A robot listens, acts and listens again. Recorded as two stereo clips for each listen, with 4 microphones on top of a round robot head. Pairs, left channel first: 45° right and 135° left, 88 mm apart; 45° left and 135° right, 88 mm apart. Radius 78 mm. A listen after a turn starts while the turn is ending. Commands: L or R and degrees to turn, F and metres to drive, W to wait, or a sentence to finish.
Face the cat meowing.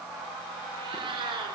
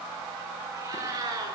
L175
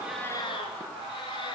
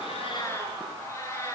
R15
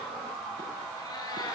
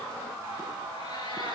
W
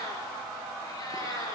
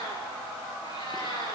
L10
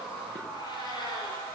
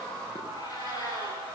W
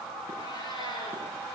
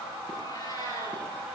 Facing the cat meowing.